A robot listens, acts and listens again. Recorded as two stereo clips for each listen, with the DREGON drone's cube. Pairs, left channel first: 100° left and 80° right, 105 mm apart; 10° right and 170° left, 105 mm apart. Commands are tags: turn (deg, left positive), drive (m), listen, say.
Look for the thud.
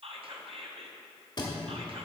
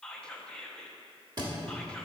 <turn deg="135"/>
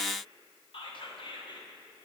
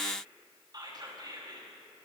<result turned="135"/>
<say>I heard a thud from this way, but can't make it out now.</say>